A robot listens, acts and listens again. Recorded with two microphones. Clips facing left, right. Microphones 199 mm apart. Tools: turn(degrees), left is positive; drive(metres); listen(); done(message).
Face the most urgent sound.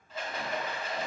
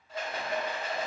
listen()
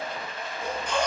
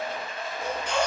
turn(degrees=-65)
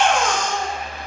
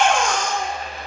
turn(degrees=-10)
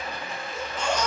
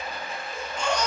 done("Found it: a baby crying, straight ahead, under 1 m away.")